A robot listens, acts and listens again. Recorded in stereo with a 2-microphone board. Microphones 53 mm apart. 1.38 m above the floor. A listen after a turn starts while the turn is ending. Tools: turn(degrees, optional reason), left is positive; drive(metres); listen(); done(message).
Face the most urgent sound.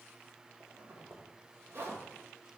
listen()
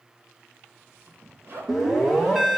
turn(degrees=-30)
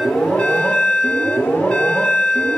turn(degrees=20, reason="So it is at 20° left.")
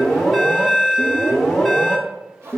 done("Found it: an alarm, straight ahead.")